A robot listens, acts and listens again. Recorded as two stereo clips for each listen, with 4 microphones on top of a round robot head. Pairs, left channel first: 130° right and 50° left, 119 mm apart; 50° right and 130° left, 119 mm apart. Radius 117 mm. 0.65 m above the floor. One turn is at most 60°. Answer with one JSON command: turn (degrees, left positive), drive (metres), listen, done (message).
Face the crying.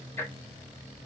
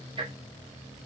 {"listen": true}
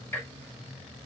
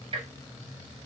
{"listen": true}
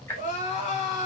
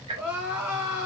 {"turn": -60}
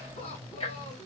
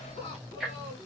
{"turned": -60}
{"turn": -60}
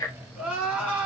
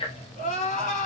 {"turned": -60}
{"turn": -30}
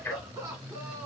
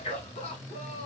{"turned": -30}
{"turn": -15}
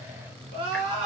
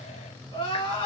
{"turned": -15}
{"done": "Found it: crying, straight ahead."}